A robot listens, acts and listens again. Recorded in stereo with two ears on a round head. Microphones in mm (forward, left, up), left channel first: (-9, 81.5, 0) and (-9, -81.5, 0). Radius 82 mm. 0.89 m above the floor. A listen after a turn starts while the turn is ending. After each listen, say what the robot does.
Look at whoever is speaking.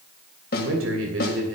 Turn 90° right.
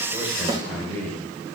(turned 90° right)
Turn 10° left.
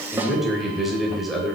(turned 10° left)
Facing the man speaking.